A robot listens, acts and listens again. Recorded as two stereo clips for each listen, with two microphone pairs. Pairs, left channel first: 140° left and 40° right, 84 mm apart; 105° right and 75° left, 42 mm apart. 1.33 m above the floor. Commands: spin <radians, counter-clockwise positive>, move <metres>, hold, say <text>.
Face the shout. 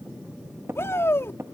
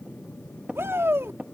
spin 1.48
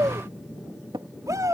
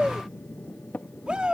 spin 0.17
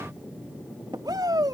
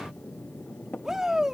say Facing the shout.